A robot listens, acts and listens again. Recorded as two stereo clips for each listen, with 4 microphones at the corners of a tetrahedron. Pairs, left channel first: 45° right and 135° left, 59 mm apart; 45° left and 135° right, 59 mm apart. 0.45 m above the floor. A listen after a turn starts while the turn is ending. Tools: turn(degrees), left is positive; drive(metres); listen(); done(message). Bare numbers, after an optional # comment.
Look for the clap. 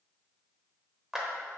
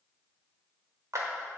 # The clap: 140° right.
turn(-140)
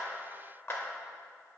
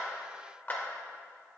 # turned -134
# The clap is now 10° right.
turn(-10)
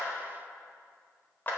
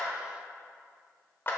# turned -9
done("Found it: a clap, straight ahead, 1 to 2 m away.")